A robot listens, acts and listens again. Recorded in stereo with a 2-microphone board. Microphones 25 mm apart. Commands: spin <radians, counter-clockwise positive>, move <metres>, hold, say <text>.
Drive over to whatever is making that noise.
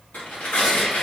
spin 1.57
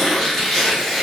move 1.0
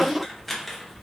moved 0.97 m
move 1.0
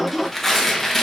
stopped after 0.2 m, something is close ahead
spin 0.17
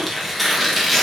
say I am next to the tearing paper.